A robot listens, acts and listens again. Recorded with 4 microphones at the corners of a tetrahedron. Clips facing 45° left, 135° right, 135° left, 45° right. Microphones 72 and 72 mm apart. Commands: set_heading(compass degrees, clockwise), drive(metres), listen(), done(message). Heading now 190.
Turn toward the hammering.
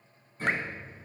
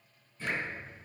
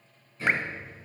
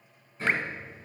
set_heading(180)
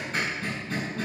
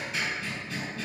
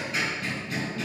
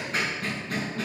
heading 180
done("Facing the hammering, over 4 m away.")